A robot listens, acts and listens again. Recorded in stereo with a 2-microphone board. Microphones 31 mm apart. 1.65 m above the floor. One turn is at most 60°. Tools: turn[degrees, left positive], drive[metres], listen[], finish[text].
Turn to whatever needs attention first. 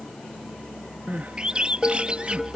Thought: The crying: about 60° right or 120° right.
Action: turn[-60]
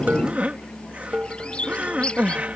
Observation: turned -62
Thought: So it is at 55° right.
Action: turn[-55]
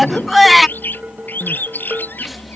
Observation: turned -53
Action: finish[Facing the crying.]